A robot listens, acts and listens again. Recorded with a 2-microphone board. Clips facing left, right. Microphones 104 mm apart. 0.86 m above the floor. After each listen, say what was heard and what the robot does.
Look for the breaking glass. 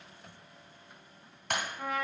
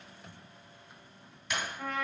The breaking glass: about 55° left or 125° left. Turn 55° left.
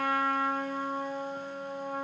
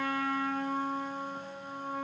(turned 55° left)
Keep listening.
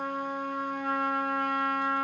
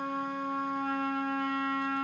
I heard breaking glass, but can't make it out now. It was about straight ahead or 70° left.